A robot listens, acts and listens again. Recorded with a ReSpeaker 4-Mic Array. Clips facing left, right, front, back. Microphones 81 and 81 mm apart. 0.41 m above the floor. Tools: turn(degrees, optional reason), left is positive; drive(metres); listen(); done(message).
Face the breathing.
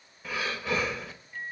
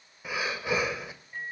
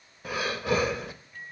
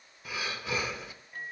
turn(degrees=-15, reason="The breathing: 15° right.")
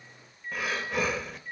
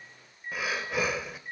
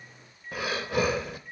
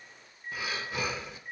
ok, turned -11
done("Facing the breathing.")